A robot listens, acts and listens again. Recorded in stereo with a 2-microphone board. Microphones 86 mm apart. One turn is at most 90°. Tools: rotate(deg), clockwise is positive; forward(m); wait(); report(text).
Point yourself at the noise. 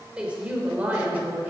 rotate(20)
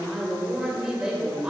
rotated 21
rotate(30)
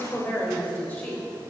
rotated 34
rotate(-20)
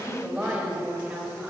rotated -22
rotate(10)
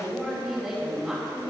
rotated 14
report("Found it: a woman speaking, straight ahead, over 4 m away.")